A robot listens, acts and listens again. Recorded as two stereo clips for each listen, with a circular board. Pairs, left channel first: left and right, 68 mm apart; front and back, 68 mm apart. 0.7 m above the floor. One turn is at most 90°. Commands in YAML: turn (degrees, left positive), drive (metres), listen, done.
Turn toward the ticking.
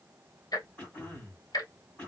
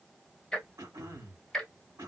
turn: 85
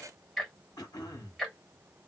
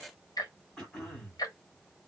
done: "Facing the ticking."